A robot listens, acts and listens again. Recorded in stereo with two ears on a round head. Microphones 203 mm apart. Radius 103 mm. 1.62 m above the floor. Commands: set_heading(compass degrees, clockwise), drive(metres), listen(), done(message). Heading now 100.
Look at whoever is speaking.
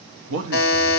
set_heading(170)
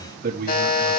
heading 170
set_heading(210)
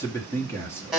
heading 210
set_heading(200)
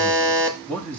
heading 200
done("Facing the man speaking.")